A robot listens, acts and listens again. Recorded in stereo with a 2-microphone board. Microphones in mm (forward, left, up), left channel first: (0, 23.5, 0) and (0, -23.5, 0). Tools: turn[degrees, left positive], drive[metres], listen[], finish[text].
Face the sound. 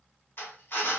Thought: The drill: about 60° left or 120° left.
Action: turn[60]
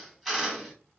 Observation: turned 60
Action: finish[Found it: a drill, straight ahead, 1 to 2 m away.]